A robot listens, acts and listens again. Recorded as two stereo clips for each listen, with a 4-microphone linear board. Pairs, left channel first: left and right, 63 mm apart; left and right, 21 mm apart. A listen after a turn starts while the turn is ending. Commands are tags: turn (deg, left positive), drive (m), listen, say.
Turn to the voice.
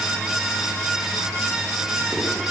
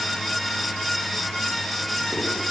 <listen/>
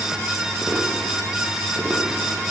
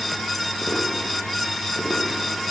<listen/>
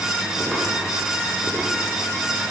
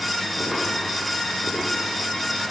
<say>I can't make out anyone speaking.</say>